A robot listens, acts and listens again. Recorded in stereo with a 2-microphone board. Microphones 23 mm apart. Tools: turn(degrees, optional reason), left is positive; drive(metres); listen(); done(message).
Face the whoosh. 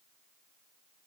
listen()
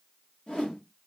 turn(degrees=45, reason="The whoosh: about 45° left or 135° left.")
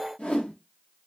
turn(degrees=85, reason="So it is at 85° left.")
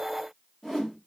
done("Facing the whoosh, 1 to 2 m away.")